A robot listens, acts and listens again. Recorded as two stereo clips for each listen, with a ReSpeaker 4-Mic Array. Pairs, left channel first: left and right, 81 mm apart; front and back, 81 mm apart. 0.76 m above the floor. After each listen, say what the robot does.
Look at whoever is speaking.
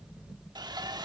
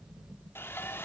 Keep listening.
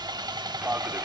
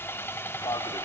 Turn 25° right.
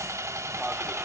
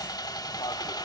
Turn 15° right.
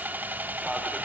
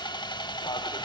Keep listening.
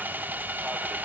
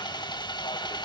Keep listening.
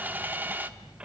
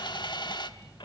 Turn 15° right.
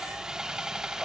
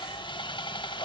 Facing the man speaking.